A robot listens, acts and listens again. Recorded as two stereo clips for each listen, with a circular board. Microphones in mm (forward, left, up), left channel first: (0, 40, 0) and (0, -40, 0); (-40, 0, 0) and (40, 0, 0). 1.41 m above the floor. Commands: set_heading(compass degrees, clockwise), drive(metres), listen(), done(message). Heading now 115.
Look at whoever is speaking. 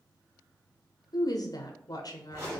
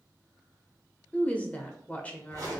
set_heading(5)
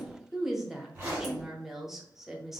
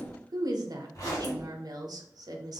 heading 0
done("Found it: a woman speaking, straight ahead, under 1 m away.")